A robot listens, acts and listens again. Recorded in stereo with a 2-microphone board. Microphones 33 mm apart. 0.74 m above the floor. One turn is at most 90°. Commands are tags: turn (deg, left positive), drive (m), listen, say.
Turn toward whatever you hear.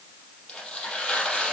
<turn deg="20"/>
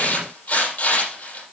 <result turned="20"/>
<turn deg="90"/>
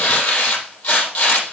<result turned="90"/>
<turn deg="75"/>
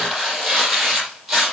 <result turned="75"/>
<say>Found it: tearing paper, straight ahead, over 4 m away.</say>